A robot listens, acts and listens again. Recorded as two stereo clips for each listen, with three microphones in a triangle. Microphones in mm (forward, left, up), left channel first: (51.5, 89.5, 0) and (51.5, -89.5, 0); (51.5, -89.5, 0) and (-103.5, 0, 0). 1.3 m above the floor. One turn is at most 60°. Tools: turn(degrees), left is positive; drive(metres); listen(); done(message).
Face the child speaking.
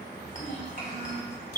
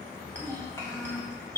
turn(degrees=45)
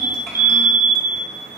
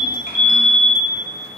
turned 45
listen()
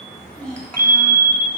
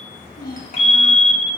done("Facing the child speaking.")